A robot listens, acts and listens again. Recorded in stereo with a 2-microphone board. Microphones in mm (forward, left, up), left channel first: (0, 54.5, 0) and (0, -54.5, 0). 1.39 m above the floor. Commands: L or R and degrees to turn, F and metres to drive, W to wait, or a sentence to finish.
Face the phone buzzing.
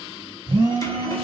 R50
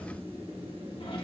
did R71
W
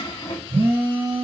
R60
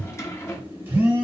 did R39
R20
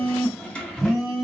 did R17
Facing the phone buzzing, 2 to 4 m away.